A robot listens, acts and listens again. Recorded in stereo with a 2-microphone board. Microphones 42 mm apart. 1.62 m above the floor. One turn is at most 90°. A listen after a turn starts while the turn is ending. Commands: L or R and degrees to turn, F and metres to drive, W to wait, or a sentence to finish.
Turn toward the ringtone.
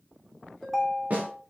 L30
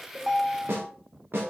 R30
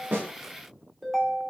Facing the ringtone, 2 to 4 m away.